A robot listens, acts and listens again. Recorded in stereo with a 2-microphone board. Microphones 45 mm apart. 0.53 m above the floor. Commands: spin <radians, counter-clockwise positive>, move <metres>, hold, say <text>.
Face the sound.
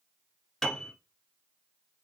spin 0.52
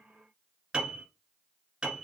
spin -0.35
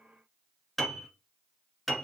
say Found it: a piano, straight ahead.